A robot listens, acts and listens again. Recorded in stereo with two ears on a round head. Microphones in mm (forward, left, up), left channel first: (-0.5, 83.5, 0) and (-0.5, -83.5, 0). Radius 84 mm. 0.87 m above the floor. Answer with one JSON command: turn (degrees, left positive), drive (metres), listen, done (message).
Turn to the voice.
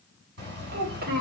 {"turn": -50}
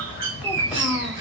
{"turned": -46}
{"listen": true}
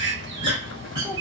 {"listen": true}
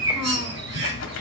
{"done": "I heard a child speaking, but can't make it out now. It was about 5° right or 85° right."}